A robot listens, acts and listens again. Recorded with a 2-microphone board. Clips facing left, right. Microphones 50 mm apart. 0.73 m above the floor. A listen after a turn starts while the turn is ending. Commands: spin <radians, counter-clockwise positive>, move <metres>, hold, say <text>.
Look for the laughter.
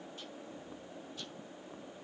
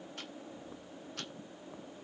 hold
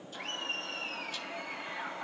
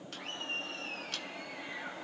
spin 1.31
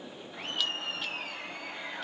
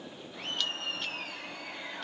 say Facing the laughter.